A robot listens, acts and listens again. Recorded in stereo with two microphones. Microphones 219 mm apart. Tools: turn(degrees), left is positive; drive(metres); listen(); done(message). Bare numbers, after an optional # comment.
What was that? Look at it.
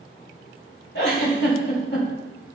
# The giggle: about 55° left or 125° left.
turn(55)
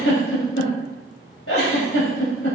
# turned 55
# So it is at 75° left.
turn(75)
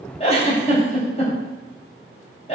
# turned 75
# The giggle is now 30° left.
turn(30)
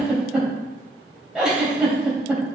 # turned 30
done("Found it: a giggle, straight ahead, 2 to 4 m away.")